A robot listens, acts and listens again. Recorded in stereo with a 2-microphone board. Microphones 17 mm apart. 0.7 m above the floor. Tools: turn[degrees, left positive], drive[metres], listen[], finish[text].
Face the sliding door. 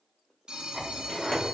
Thought: The sliding door: about 45° left or 135° left.
Action: turn[45]
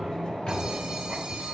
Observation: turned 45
Thought: So it is at 90° left.
Action: turn[90]
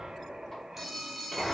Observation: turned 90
Thought: The sliding door is now 30° left.
Action: turn[30]
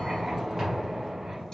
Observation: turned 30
Thought: The sliding door is now 20° right.
Action: turn[-20]
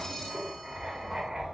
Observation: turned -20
Action: listen[]
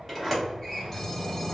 Action: finish[Found it: a sliding door, straight ahead, 2 to 4 m away.]